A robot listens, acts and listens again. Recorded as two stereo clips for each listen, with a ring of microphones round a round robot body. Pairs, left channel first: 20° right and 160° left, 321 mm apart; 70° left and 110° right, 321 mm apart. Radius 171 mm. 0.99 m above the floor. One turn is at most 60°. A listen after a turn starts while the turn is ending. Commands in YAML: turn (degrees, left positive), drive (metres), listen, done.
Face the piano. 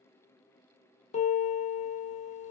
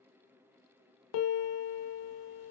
turn: 50
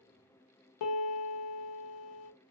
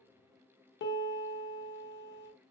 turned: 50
turn: 10
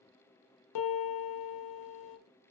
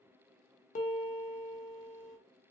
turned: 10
done: "Found it: a piano, straight ahead, under 1 m away."